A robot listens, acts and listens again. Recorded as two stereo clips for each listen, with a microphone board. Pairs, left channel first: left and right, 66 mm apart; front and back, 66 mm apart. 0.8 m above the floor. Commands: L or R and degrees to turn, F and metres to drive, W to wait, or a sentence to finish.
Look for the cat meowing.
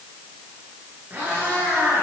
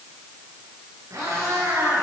R145
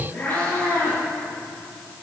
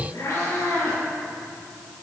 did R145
L30
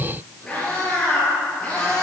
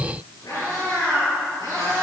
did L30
L15
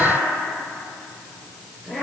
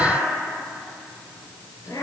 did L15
Facing the cat meowing, over 4 m away.